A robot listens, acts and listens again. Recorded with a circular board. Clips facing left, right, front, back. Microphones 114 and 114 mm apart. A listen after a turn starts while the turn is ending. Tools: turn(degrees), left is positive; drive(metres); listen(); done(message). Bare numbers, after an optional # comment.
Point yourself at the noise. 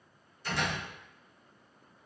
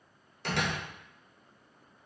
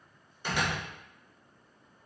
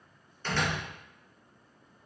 # The door slam: 75° right.
turn(-75)
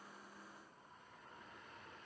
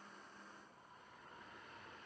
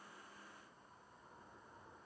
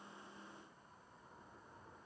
done("I heard a door slam from this way, but can't make it out now.")